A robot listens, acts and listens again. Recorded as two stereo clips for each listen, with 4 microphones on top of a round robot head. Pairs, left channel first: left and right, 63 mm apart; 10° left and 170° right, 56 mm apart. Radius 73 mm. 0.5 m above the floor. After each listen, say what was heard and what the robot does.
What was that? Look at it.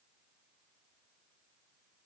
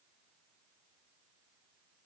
Keep listening.
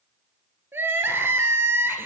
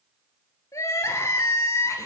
The crying: 35° right. Turn 35° right.
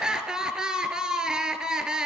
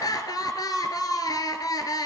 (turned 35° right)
The crying is now 10° right. Turn 10° right.
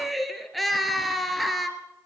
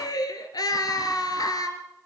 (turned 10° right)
Facing the crying.